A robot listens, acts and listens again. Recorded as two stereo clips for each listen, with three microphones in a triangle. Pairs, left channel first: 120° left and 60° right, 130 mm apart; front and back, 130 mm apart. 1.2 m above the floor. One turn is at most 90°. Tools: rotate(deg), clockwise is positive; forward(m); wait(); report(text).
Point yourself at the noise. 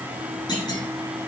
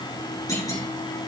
rotate(-65)
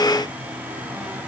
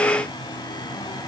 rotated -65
report("I heard a clunk from this way, but can't make it out now.")